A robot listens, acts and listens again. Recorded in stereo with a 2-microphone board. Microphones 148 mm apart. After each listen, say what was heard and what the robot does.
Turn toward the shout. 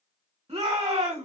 The shout: about 40° right or 140° right. Turn 40° right.
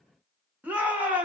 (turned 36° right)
So it is at 10° right. Turn 10° right.
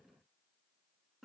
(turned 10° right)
Keep listening.
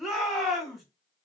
Facing the shout.